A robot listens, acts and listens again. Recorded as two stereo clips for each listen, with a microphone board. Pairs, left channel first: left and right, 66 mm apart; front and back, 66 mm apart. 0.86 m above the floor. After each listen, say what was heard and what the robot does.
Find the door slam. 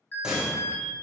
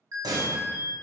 The door slam: 170° right. Turn 170° right.
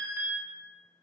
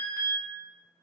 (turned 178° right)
Nothing new. It was at 10° left. Turn 10° left.
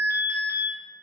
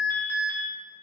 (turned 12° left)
I heard a door slam from this way, but can't make it out now.